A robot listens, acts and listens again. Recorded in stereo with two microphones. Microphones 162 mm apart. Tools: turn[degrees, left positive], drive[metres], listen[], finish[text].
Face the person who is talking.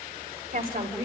Thought: The woman speaking: about 60° right or 120° right.
Action: turn[-60]
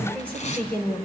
Thought: So it is at 10° left.
Action: turn[10]
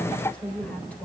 Thought: The woman speaking is now 10° left.
Action: turn[10]
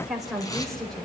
Action: finish[Facing the woman speaking, 2 to 4 m away.]